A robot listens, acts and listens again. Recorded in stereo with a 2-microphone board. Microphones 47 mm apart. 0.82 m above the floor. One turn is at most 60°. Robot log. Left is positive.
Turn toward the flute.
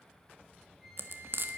cmd yaw -30
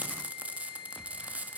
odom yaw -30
note: So it is at 30° left.
cmd yaw +30
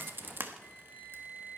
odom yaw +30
end: Found it: a flute, straight ahead.